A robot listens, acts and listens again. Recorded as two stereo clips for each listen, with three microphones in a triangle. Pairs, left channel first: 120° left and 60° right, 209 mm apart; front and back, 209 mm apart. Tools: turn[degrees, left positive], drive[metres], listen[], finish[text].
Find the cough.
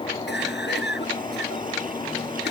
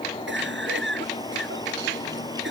Thought: The cough: 155° left.
Action: turn[155]
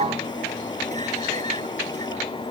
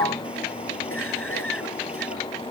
Action: listen[]
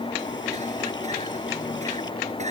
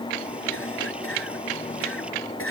Action: finish[Found it: a cough, straight ahead.]